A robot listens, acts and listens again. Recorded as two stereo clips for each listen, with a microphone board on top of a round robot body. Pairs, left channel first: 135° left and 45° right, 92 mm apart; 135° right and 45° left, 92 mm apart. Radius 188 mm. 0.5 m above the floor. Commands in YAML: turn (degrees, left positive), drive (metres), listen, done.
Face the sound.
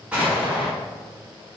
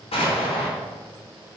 turn: -125
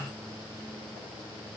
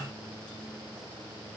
done: "Facing where the explosion came from. I can't hear it now."